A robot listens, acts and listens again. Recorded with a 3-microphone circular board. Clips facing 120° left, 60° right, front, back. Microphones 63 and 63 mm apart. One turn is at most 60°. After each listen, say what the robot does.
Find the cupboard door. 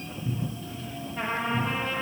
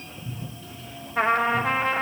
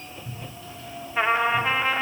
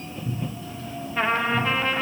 Turn 60° left.
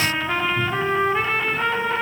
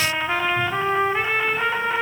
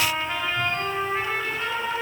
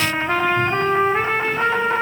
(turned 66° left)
Turn 60° left.
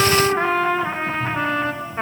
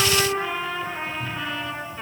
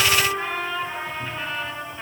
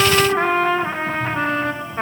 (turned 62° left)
Turn 10° left.
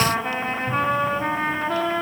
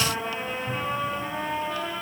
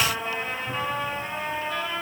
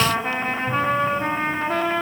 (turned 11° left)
Facing where the cupboard door came from. I can't hear it now.